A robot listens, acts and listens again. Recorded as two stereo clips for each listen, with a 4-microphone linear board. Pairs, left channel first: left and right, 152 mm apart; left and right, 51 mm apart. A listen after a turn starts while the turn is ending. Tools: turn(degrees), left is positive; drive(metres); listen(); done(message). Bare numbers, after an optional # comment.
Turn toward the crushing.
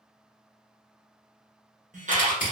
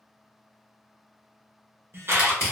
# The crushing: about 65° left or 115° left.
turn(65)
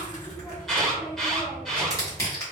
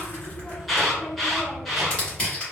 # So it is at 25° left.
turn(25)
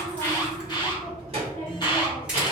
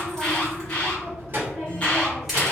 listen()
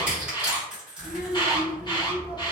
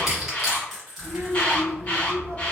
done("Found it: crushing, straight ahead.")